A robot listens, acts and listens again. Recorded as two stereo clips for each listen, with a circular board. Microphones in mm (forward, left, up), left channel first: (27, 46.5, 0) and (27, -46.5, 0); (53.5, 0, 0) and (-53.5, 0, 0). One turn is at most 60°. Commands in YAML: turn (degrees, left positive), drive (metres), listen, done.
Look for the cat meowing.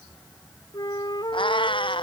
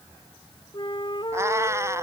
turn: 60
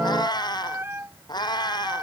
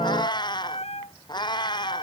turn: 45
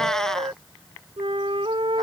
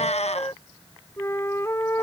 done: "Facing the cat meowing."